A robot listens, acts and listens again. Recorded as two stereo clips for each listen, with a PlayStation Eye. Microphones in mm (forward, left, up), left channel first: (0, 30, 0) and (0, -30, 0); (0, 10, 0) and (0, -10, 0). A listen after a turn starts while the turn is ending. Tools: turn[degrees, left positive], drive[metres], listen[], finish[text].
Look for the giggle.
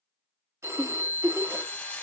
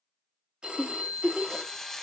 Action: turn[-90]
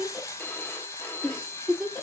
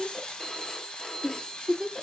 Action: finish[Found it: a giggle, straight ahead, 1 to 2 m away.]